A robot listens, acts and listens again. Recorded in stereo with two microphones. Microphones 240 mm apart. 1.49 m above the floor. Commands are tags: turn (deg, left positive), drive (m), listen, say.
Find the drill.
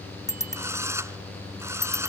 <turn deg="-30"/>
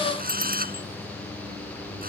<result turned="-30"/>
<turn deg="-140"/>
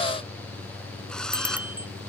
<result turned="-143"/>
<listen/>
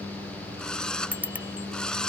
<say>Facing the drill.</say>